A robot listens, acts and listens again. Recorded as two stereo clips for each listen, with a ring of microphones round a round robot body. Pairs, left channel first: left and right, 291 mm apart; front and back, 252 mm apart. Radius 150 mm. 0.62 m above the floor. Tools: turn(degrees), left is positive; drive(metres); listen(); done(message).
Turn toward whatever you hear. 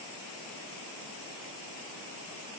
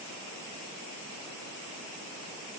listen()
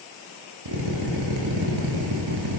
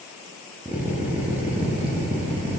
turn(degrees=-95)
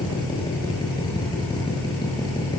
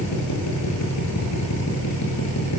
turn(degrees=15)
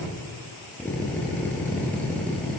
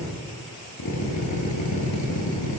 done("Found it: a drill, straight ahead.")